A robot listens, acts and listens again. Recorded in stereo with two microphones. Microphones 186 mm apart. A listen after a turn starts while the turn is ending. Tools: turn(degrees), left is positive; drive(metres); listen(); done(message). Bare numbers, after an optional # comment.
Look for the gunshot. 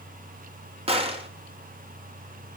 # The gunshot: about 30° right or 150° right.
turn(-30)
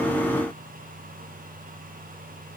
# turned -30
listen()
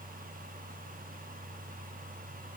done("I heard a gunshot, but can't make it out now. It was about straight ahead or 120° right.")